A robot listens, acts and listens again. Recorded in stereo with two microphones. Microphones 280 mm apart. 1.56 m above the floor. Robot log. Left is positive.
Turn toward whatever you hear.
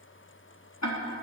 note: The ticking: about 75° left or 105° left.
cmd yaw +75
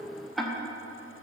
end: Facing the ticking, 1 to 2 m away.